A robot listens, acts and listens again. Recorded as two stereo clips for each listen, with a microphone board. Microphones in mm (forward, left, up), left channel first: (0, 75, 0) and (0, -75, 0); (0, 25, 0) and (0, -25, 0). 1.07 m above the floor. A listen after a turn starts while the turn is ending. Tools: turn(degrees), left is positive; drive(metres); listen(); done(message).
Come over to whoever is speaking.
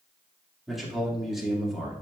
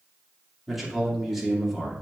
turn(degrees=30)
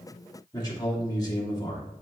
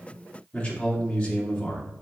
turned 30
turn(degrees=150)
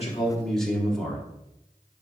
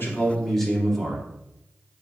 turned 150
drive(metres=1.0)
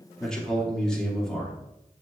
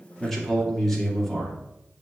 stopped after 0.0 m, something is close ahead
done("Blocked. The man speaking is further on, straight ahead.")